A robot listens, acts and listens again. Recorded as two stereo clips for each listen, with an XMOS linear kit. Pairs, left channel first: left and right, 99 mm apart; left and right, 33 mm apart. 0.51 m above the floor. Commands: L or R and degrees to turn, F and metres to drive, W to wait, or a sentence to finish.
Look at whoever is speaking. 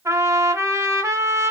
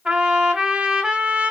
W
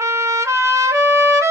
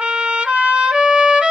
W
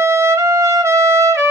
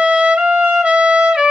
I can't make out anyone speaking to turn to.